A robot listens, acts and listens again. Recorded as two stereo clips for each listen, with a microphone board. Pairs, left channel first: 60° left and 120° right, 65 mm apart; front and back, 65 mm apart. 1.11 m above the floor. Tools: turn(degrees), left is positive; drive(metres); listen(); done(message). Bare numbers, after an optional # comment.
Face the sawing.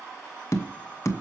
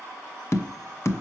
listen()
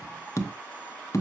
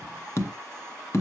listen()
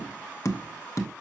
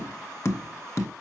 done("I can't make out sawing to turn to.")